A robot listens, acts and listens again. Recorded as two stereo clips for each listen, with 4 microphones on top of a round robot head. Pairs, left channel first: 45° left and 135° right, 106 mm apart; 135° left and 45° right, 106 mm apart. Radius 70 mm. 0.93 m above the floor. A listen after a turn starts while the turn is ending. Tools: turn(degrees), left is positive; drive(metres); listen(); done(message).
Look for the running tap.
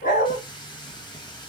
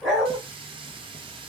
done("Facing the running tap.")